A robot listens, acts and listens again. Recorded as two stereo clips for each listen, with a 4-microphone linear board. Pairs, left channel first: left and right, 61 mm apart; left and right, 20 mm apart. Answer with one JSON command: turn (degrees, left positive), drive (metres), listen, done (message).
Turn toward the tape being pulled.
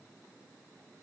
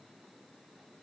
{"listen": true}
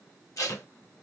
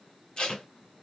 {"turn": 65}
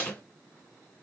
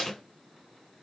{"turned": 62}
{"turn": 30}
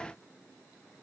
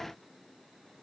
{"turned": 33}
{"listen": true}
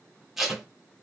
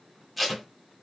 {"done": "Found it: tape being pulled, straight ahead, under 1 m away."}